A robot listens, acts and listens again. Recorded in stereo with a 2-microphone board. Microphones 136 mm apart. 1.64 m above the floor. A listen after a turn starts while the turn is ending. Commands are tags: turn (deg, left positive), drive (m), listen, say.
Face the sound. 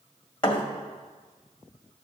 <turn deg="40"/>
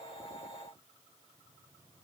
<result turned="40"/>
<listen/>
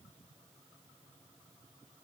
<say>I heard a thud, but can't make it out now. It was about straight ahead or 100° left.</say>